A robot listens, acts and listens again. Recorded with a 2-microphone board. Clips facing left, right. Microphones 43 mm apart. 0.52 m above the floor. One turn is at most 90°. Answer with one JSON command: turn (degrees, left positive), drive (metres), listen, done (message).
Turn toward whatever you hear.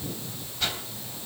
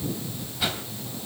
{"turn": -30}
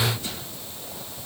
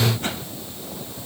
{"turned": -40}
{"turn": -90}
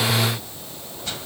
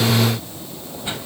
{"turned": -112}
{"turn": -20}
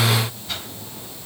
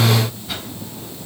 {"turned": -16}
{"done": "Facing the whoosh."}